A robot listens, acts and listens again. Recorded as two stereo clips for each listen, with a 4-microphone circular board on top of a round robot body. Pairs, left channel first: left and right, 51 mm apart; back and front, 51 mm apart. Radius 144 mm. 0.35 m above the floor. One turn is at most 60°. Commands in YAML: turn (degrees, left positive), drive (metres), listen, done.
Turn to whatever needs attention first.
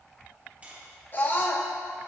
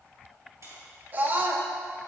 turn: 45
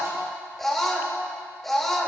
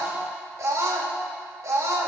done: "Found it: a scream, straight ahead."